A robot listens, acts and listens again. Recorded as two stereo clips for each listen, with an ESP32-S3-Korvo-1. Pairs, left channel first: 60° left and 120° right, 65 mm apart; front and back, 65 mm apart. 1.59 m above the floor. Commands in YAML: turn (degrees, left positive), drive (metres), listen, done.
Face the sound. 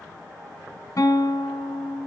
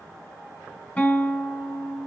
turn: 65
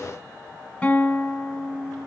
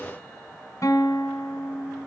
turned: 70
done: "Found it: a guitar, straight ahead, 2 to 4 m away."